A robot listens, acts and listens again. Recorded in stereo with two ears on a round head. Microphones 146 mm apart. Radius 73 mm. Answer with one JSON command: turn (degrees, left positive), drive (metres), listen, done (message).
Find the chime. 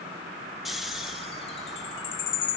{"turn": 35}
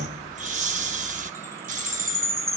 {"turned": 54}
{"turn": -20}
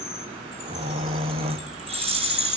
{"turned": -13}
{"done": "Found it: a chime, straight ahead, 2 to 4 m away."}